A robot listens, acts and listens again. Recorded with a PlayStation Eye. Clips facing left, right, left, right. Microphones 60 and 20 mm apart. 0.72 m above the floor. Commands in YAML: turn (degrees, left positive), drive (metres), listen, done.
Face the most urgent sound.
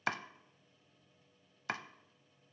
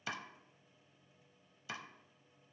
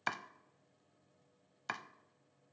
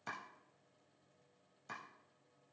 listen: true
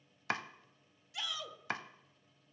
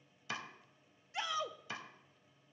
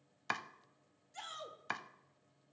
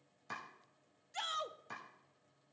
turn: -35
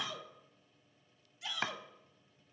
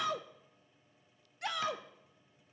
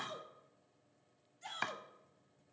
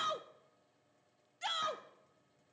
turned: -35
turn: -105
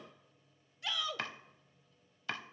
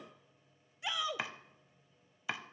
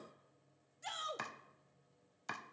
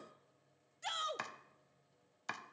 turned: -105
turn: -20
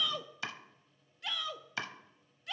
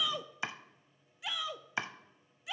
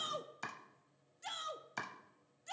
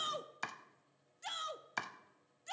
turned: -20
turn: -10
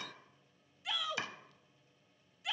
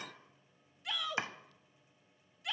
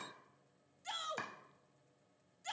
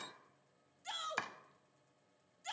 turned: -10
done: "Facing the shout."